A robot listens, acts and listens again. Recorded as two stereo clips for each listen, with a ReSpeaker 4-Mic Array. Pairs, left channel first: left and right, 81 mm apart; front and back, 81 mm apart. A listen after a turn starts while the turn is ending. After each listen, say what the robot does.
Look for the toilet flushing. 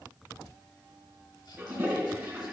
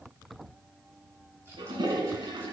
Turn 155° right.
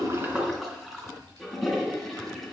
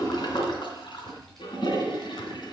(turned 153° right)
Found it: a toilet flushing, straight ahead, 2 to 4 m away.